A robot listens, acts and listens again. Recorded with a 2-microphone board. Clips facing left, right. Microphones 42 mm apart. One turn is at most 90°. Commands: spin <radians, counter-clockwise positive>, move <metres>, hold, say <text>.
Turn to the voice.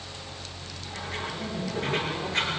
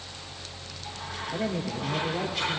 spin -0.52
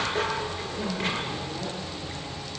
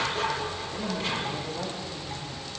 say Facing the woman speaking.